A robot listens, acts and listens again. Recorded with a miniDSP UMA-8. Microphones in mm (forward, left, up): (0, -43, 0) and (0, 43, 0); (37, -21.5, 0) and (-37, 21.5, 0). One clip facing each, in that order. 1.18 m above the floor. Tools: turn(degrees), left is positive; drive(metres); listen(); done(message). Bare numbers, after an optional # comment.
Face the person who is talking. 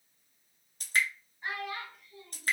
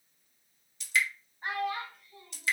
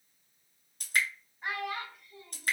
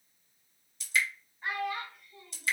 # The child speaking: 40° left.
turn(40)
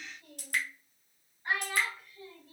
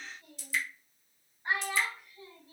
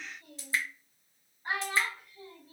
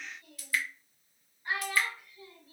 # The child speaking is now 10° left.
turn(10)
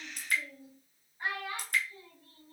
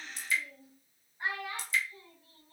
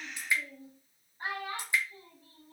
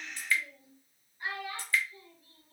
done("Facing the child speaking, 2 to 4 m away.")